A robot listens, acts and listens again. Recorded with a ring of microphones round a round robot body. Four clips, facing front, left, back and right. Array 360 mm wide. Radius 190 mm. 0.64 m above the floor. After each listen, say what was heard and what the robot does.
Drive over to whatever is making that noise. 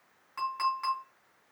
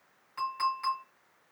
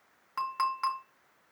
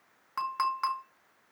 The clink: 110° right. Turn 110° right.
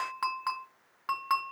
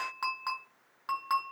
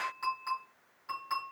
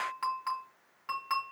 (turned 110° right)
The clink is now 15° left. Turn 15° left.
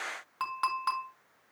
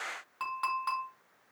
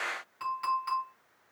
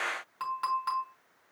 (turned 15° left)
Drive 1.0 m forward.
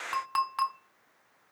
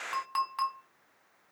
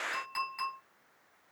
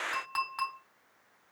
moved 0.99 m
Drive 1.0 m forward.
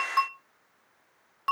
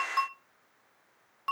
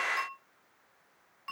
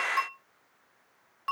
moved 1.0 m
Drive 1.0 m forward.
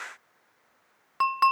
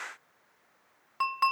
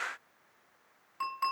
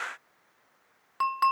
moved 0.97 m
The clink is now 10° right. Turn 10° right.
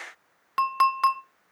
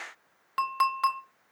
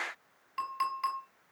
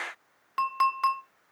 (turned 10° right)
Drive 1.0 m forward.
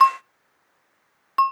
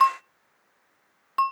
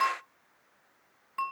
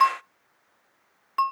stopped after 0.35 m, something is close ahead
I am next to the clink.